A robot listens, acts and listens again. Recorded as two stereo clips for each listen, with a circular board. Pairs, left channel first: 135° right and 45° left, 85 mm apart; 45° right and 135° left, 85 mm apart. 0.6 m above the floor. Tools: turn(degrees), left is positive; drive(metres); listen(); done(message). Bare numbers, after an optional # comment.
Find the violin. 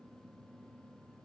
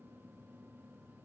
listen()
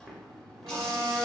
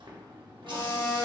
# The violin: 10° left.
turn(10)
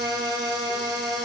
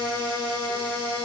done("Found it: a violin, straight ahead, under 1 m away.")